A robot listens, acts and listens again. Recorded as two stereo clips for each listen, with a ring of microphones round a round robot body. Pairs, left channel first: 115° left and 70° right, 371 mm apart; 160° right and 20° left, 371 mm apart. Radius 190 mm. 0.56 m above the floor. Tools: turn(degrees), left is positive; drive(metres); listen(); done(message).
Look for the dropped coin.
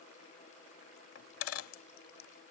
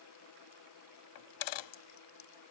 turn(degrees=165)
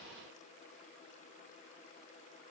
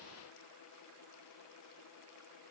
done("I heard a dropped coin from this way, but can't make it out now.")